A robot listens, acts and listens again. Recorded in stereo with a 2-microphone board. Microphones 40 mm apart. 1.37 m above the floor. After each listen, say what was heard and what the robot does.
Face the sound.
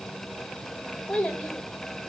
The child speaking: about 15° left or 165° left. Turn 15° left.
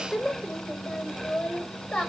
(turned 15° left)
Turn 30° left.
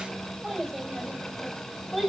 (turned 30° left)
So it is at 10° right. Turn 10° right.
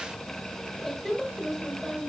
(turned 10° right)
Found it: a child speaking, straight ahead.